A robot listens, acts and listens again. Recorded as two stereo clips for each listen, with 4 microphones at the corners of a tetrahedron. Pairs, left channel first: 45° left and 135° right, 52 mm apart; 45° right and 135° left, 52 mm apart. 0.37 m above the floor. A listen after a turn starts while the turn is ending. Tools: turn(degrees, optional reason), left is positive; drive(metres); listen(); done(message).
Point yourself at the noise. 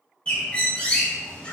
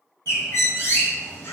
turn(degrees=-20, reason="The bird: 20° right.")
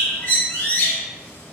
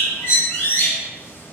done("Facing the bird.")